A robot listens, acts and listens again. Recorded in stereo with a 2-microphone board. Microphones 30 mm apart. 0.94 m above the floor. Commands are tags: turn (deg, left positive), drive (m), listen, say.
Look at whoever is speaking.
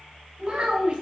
<turn deg="-35"/>
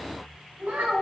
<turn deg="-110"/>
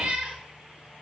<listen/>
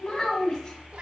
<turn deg="20"/>
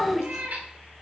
<say>Found it: a child speaking, straight ahead.</say>